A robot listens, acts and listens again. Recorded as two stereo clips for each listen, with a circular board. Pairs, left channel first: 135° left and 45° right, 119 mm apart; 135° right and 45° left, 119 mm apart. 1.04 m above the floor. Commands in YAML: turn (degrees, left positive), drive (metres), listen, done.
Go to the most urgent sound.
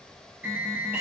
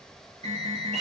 turn: 30
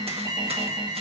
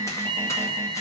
drive: 1.0
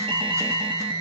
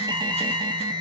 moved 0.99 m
drive: 1.0
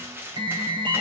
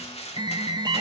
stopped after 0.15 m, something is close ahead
done: "Arrived at the alarm, straight ahead."